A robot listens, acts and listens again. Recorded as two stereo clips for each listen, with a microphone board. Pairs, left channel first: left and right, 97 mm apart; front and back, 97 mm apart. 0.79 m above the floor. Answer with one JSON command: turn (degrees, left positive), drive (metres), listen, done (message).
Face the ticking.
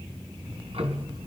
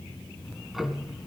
{"turn": -90}
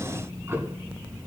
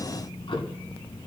{"turn": -25}
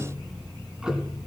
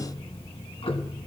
{"turn": -10}
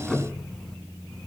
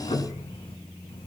{"done": "Facing the ticking."}